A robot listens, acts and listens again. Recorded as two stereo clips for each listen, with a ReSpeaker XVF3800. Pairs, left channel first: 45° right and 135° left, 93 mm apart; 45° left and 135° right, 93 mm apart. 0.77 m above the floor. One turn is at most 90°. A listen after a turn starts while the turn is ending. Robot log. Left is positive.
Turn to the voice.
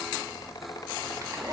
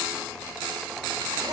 cmd idle
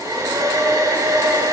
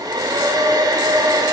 cmd idle
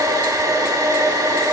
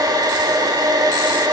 end: I can't make out anyone speaking to turn to.